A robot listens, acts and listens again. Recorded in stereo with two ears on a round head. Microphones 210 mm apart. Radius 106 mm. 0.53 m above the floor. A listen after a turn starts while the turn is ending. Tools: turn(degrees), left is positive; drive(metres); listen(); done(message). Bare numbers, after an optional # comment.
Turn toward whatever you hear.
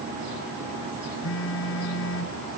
# The phone buzzing: about 55° left or 125° left.
turn(55)
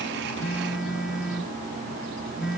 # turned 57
done("Found it: a phone buzzing, straight ahead.")